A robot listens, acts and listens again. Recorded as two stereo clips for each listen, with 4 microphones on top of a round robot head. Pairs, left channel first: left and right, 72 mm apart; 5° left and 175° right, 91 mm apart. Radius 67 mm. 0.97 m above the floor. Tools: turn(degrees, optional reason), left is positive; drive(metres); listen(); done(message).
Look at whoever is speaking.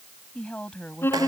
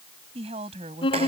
turn(degrees=170, reason="The woman speaking: 170° left.")
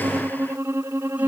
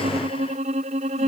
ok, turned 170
listen()
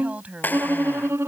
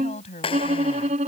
turn(degrees=-20, reason="The woman speaking is now 20° right.")
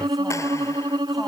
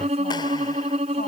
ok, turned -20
listen()
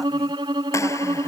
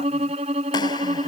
listen()
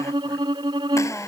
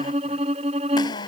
done("Facing where the woman speaking came from. I can't hear it now.")